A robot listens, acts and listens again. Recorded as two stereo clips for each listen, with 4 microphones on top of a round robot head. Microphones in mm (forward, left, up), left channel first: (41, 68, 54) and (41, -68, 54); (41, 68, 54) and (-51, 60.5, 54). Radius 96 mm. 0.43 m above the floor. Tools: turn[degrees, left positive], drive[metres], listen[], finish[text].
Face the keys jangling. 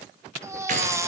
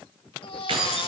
Thought: The keys jangling: 130° right.
Action: turn[-130]
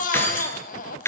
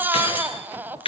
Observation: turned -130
Thought: The keys jangling is now 20° left.
Action: turn[20]
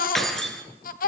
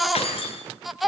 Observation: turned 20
Action: finish[Found it: keys jangling, straight ahead, over 4 m away.]